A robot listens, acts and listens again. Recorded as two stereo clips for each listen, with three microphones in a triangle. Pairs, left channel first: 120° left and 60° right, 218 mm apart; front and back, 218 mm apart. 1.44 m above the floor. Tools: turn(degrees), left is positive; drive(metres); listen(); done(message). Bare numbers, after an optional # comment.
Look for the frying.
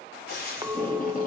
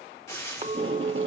# The frying: 75° left.
turn(75)
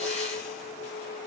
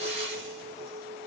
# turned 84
listen()
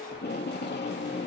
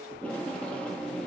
listen()
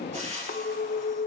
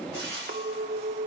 done("Found it: frying, straight ahead, 2 to 4 m away.")